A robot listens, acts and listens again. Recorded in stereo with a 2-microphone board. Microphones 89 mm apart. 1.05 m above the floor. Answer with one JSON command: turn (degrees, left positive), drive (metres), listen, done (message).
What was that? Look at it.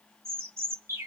{"turn": -30}
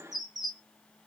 {"done": "Found it: a bird, straight ahead."}